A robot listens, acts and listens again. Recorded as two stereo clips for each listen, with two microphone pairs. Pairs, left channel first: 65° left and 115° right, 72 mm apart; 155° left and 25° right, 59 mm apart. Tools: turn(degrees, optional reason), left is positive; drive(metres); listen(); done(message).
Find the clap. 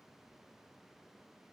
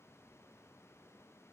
listen()
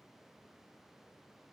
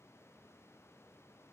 listen()
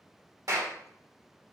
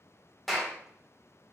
turn(degrees=-120, reason="The clap: 120° right.")
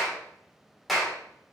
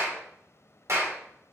turn(degrees=-25, reason="The clap is now 25° right.")
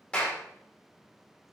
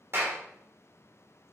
done("Facing the clap, 1 to 2 m away.")